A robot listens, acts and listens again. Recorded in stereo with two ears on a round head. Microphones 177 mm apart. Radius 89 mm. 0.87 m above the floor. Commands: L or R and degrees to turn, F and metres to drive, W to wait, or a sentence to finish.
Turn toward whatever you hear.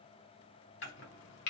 L60
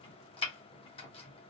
L30
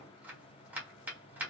R10
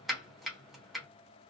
Facing the chopping, 1 to 2 m away.